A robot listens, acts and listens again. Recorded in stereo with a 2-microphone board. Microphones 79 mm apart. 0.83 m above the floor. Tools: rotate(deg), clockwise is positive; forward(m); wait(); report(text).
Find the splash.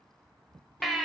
wait()
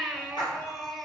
rotate(-90)
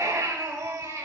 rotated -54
rotate(-35)
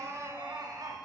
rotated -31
report("Facing where the splash came from. I can't hear it now.")